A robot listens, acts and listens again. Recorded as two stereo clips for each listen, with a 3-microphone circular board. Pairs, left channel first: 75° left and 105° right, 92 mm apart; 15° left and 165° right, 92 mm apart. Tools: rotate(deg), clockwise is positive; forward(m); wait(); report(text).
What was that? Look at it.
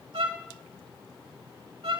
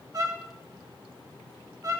rotate(115)
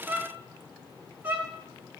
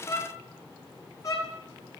rotate(35)
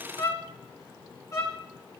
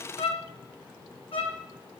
rotate(-15)
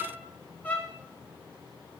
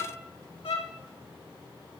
report("Found it: a violin, straight ahead, 2 to 4 m away.")